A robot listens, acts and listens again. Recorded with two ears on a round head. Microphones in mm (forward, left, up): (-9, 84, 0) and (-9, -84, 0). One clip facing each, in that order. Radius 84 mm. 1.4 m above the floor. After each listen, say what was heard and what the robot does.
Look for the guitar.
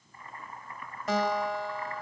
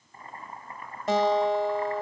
The guitar: about 25° right or 155° right. Turn 25° right.
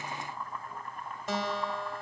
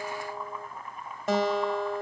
So it is at 125° right. Turn 125° right.
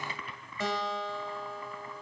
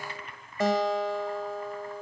The guitar is now 45° right. Turn 45° right.
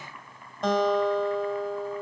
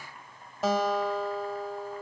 Facing the guitar, 2 to 4 m away.